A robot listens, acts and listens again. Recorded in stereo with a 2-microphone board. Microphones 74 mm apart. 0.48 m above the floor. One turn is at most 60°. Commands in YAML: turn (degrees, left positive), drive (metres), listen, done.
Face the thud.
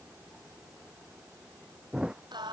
turn: -30
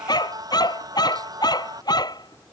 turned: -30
listen: true
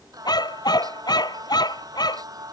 done: "I heard a thud, but can't make it out now. It was about 20° left or 140° right."